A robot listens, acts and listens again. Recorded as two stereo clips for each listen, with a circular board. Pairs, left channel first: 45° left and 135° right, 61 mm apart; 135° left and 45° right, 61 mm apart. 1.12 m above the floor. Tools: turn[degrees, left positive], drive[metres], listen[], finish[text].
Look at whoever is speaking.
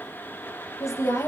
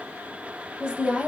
Thought: The woman speaking: 25° left.
Action: turn[25]
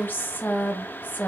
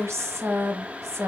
Thought: The woman speaking is now 15° right.
Action: turn[-15]
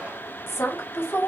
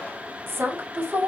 Action: finish[Found it: a woman speaking, straight ahead.]